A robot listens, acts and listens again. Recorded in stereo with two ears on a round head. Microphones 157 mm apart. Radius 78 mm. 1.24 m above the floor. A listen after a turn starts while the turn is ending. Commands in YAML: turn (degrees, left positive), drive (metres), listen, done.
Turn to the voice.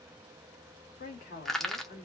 turn: 55
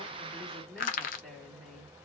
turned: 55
done: "Facing the woman speaking."